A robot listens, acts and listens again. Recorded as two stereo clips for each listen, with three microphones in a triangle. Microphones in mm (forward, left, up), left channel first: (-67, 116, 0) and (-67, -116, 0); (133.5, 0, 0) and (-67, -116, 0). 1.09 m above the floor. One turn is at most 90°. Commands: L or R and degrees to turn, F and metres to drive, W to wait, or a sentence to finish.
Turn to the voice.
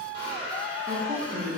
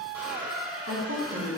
R90
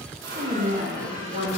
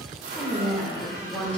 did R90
R55
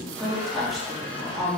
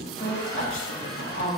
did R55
Facing the woman speaking.